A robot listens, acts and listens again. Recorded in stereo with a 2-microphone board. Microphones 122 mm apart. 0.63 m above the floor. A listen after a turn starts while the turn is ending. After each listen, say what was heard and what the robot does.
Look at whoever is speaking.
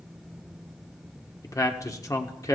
The man speaking: about 25° left or 155° left. Turn 25° left.
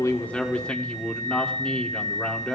So it is at 10° left. Turn 10° left.
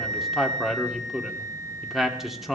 Found it: a man speaking, straight ahead.